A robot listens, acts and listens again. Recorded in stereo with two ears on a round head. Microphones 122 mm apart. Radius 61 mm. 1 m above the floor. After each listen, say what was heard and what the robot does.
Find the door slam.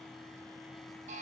Keep listening.
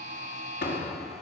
Turn 90° left.
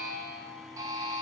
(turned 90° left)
Facing where the door slam came from. I can't hear it now.